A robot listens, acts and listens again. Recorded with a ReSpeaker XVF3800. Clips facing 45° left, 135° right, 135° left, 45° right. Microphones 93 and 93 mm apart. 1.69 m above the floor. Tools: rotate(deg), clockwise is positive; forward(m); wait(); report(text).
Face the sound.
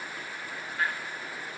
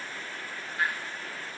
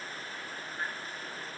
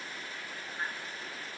wait()
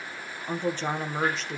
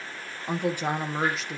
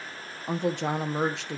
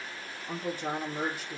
rotate(-135)
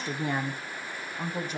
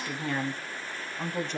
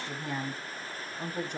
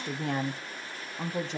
rotate(40)
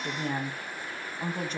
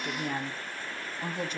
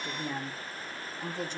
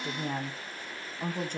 rotate(10)
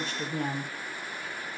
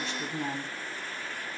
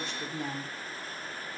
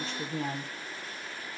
report("Facing the woman speaking.")